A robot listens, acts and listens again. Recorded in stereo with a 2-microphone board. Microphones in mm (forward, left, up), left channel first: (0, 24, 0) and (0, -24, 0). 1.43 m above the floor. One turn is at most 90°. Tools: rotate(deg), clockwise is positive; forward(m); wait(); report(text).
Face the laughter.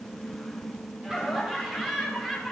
rotate(30)
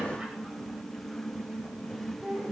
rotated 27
rotate(20)
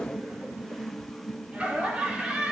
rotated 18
rotate(90)
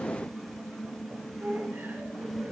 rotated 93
rotate(60)
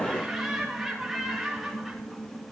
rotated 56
report("Facing the laughter.")